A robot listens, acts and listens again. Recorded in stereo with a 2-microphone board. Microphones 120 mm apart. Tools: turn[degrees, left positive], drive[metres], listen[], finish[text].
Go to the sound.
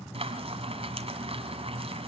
Thought: The frying: about 55° right or 125° right.
Action: turn[-55]
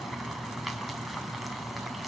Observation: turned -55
Action: drive[1.0]
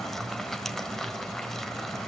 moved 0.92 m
Action: drive[1.0]
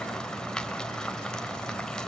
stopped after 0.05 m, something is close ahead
Action: finish[I am next to the frying.]